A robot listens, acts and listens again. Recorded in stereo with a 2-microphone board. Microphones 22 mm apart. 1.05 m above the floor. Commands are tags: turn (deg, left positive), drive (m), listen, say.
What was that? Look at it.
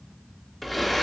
<turn deg="30"/>
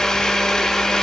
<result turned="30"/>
<turn deg="150"/>
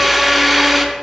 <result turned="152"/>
<say>Found it: a blender, straight ahead.</say>